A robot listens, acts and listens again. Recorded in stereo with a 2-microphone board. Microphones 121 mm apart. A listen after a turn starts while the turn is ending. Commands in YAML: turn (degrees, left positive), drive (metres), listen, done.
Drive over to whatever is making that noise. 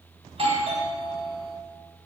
turn: -50
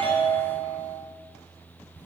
turn: -15
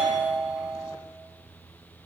drive: 1.0
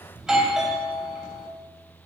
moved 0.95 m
drive: 1.0
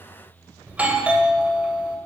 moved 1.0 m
turn: -30
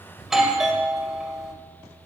turn: -10
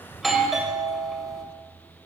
drive: 1.0
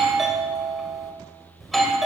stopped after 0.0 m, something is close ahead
done: "I am next to the doorbell."